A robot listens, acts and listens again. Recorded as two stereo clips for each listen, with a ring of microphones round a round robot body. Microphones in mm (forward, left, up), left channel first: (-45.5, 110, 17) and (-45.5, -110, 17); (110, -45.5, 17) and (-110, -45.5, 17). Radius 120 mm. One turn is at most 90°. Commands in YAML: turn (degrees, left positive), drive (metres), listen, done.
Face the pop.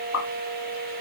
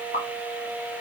turn: 60
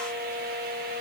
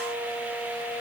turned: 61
done: "I heard a pop from this way, but can't make it out now."